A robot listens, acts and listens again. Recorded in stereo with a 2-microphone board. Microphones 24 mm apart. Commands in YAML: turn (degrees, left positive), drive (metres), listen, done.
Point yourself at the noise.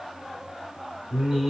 turn: -25
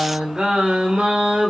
turn: -115
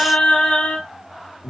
turn: 65
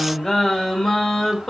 turn: 15
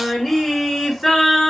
done: "Found it: singing, straight ahead."